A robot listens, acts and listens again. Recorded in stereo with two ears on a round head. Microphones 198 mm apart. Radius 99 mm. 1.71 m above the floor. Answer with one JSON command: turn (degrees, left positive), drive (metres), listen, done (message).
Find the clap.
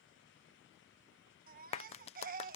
{"turn": 30}
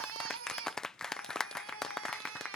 {"done": "Facing the clap."}